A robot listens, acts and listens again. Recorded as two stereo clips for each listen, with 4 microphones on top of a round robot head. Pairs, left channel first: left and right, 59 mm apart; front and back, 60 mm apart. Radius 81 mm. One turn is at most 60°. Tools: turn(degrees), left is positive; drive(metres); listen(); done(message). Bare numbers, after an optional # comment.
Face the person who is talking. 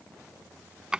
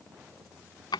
listen()
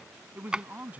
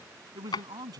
# The man speaking: 160° right.
turn(-60)
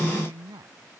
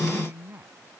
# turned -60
# The man speaking is now 115° right.
turn(-60)
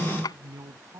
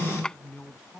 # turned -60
# The man speaking is now 70° right.
turn(-60)
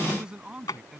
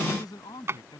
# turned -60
# The man speaking is now 15° right.
turn(-15)
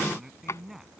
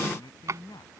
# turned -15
done("Facing the man speaking.")